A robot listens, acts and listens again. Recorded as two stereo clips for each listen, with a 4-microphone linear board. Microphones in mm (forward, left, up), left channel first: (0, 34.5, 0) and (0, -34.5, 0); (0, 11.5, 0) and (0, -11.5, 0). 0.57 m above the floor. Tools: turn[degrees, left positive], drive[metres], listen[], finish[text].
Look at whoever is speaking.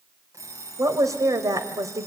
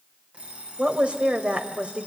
Thought: The woman speaking: about 55° right or 125° right.
Action: turn[-55]
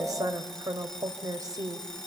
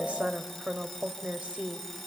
Thought: So it is at 65° right.
Action: turn[-65]
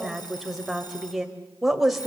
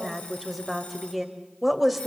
Action: finish[Found it: a woman speaking, straight ahead, 2 to 4 m away.]